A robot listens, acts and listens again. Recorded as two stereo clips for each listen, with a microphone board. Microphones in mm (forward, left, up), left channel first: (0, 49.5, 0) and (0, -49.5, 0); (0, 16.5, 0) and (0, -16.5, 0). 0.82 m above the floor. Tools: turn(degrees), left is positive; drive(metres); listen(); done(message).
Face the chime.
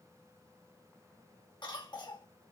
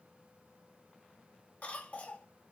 listen()
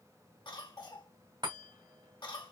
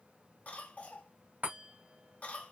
turn(degrees=-50)
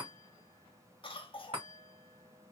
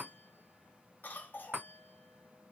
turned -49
turn(degrees=-80)
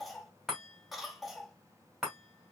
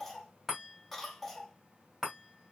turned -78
done("Facing the chime, 2 to 4 m away.")